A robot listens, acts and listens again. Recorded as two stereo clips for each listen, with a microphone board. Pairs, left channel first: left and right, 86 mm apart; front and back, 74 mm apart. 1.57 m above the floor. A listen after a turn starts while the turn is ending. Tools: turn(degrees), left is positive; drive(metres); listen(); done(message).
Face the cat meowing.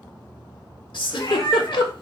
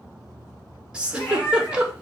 turn(degrees=55)
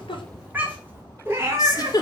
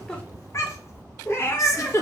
turn(degrees=-50)
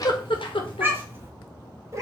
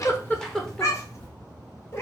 turn(degrees=-45)
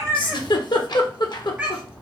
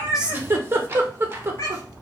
turn(degrees=-20)
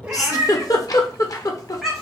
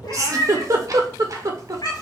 done("Found it: a cat meowing, straight ahead.")